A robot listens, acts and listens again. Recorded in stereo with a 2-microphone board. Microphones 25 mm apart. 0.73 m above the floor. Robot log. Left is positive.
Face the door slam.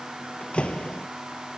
note: The door slam: about 60° left or 120° left.
cmd yaw +60
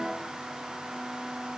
cmd idle
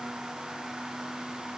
end: I heard a door slam, but can't make it out now. It was about straight ahead or 60° left.